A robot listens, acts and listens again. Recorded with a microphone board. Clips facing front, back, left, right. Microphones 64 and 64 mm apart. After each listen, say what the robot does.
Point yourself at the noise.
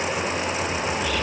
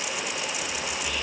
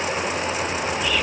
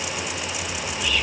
Facing the whispering.